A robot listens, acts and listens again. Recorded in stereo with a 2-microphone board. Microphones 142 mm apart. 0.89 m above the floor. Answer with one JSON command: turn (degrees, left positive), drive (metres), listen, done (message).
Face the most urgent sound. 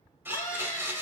{"turn": 65}
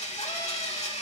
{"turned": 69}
{"listen": true}
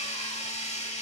{"listen": true}
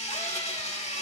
{"done": "I heard a scream, but can't make it out now. It was about 5° right or 45° left."}